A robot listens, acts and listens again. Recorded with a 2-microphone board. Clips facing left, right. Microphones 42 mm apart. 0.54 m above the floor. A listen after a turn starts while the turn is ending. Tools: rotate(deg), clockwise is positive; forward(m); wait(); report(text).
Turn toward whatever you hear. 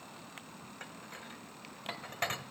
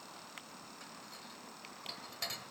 rotate(-45)
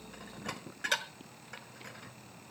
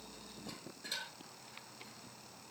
rotate(-90)
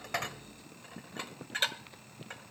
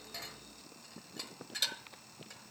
rotate(-45)
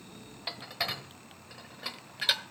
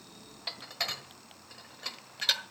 rotate(-10)
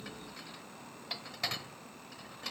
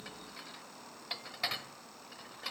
report("Facing the dishes clattering, 1 to 2 m away.")